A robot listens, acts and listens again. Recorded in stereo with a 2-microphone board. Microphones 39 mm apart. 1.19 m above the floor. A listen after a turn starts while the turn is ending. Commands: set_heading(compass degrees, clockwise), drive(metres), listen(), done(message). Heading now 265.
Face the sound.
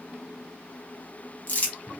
set_heading(220)
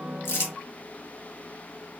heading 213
listen()
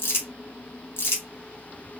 set_heading(133)
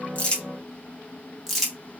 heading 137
done("Facing the crumpling, under 1 m away.")